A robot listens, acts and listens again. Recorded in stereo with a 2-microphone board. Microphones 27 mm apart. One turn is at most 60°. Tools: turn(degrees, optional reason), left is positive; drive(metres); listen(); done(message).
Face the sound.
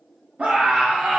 turn(degrees=-55, reason="The scream: about 55° right or 125° right.")
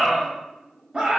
turn(degrees=-40, reason="So it is at 40° right.")
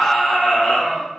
done("Found it: a scream, straight ahead.")